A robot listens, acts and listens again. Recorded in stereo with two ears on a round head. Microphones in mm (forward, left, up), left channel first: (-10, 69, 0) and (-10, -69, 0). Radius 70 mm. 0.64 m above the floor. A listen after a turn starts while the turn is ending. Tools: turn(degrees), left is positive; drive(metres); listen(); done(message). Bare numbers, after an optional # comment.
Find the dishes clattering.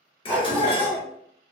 # The dishes clattering: about 35° left or 145° left.
turn(35)
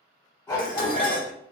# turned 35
# So it is at 105° left.
turn(105)
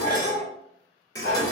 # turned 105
# The dishes clattering is now 25° left.
turn(25)
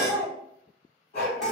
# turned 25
listen()
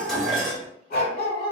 done("Facing the dishes clattering, 1 to 2 m away.")